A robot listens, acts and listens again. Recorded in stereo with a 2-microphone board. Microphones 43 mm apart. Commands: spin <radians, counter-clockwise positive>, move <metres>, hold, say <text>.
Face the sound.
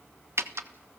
spin -1.57
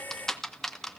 spin 0.17
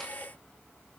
hold
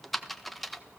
say Found it: typing on a keyboard, straight ahead, 1 to 2 m away.